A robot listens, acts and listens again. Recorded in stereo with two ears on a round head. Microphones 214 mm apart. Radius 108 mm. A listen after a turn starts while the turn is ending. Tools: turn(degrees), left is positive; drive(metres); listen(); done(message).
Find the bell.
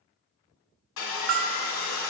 turn(degrees=-60)
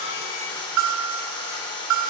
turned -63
turn(degrees=-55)
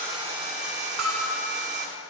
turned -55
done("Found it: a bell, straight ahead, 1 to 2 m away.")